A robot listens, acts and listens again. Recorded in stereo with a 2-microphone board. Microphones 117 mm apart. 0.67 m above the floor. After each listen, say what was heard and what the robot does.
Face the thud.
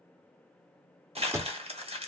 The thud: about 25° right or 155° right. Turn 25° right.
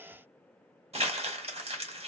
Keep listening.
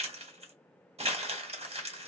I heard a thud, but can't make it out now. It was about straight ahead or 130° right.